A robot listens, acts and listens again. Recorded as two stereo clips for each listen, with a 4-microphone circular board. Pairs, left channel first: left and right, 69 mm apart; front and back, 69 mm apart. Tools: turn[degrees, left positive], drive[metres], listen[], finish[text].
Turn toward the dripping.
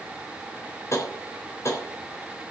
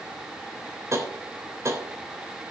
Action: listen[]
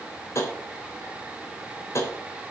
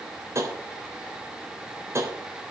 Action: listen[]
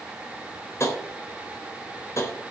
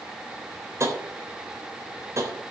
Action: finish[I can't make out dripping, only tapping.]